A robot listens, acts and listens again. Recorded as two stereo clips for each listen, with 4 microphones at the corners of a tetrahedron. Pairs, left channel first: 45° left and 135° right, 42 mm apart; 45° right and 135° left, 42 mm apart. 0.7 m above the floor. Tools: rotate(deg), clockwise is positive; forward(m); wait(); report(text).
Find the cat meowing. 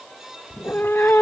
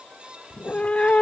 rotate(-15)
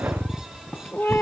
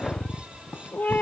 report("Found it: a cat meowing, straight ahead.")